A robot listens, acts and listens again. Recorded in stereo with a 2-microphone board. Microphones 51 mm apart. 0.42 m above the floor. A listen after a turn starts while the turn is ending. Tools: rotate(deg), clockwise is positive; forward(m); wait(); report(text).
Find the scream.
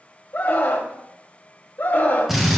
rotate(-45)
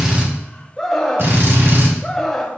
report("Facing the scream, 1 to 2 m away.")